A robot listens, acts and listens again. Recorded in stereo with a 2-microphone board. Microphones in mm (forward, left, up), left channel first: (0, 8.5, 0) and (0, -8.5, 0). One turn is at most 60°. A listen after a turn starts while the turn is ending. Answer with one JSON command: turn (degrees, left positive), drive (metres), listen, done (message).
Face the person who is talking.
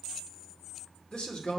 {"turn": 55}
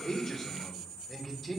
{"done": "Found it: a man speaking, straight ahead, 2 to 4 m away."}